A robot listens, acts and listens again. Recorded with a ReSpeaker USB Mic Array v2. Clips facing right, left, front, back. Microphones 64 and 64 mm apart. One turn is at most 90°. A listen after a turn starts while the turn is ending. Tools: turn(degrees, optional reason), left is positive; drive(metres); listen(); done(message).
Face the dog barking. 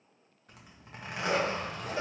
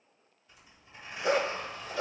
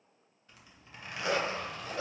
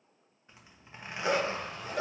turn(degrees=90, reason="The dog barking: 120° left.")
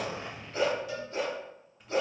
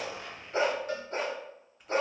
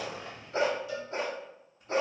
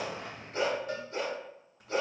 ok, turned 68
turn(degrees=55, reason="The dog barking is now 55° left.")
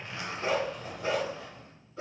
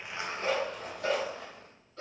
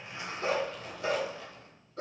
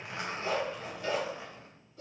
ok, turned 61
turn(degrees=-10, reason="The dog barking is now 10° right.")
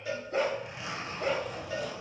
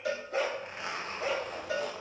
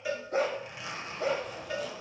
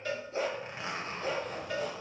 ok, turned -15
done("Facing the dog barking.")